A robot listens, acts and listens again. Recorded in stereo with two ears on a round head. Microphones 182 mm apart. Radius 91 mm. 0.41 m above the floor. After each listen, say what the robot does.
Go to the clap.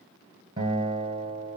Keep listening.
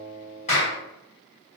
Turn 35° left.
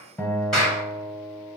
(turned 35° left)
Drive 1.0 m forward.
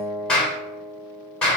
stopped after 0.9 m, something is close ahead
Arrived at the clap, straight ahead.